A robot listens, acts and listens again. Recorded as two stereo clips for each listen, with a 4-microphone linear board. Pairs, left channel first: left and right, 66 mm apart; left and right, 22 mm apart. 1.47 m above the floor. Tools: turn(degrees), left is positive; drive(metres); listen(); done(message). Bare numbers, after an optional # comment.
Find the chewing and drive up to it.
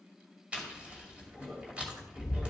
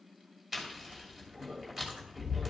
# The chewing: about 20° right or 160° right.
turn(-20)
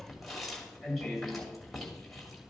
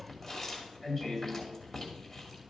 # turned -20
drive(1.0)
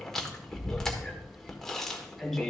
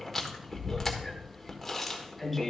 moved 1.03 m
drive(1.0)
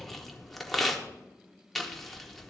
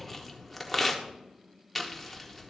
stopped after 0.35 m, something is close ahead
done("Arrived at the chewing, straight ahead.")